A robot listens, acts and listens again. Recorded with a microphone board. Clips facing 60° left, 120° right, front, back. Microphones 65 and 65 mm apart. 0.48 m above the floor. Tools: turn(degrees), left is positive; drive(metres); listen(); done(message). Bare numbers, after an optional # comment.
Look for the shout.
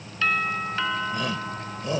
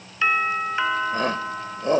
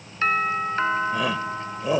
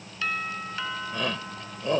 # The shout: 80° right.
turn(-80)
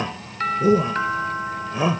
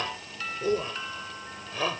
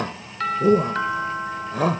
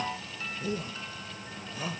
# The shout is now 10° right.
turn(-10)
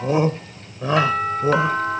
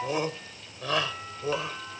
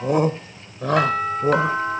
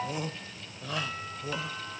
done("Found it: a shout, straight ahead.")